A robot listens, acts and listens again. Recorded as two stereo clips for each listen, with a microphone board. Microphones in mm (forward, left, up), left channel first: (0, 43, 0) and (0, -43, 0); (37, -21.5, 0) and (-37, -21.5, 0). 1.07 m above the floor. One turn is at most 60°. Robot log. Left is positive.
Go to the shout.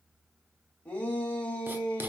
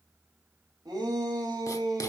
note: The shout: 160° left.
cmd yaw +60
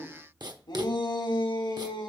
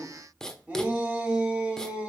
note: The shout is now 105° left.
cmd yaw +60
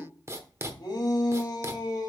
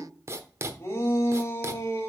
note: The shout is now 50° left.
cmd yaw +50
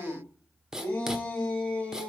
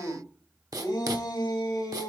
note: The shout is now 15° left.
cmd yaw +15
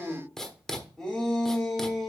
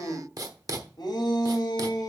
cmd fwd 1.0
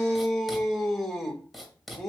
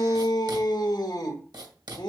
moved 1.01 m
cmd fwd 1.0
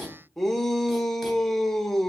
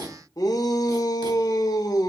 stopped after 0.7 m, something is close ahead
end: I am next to the shout.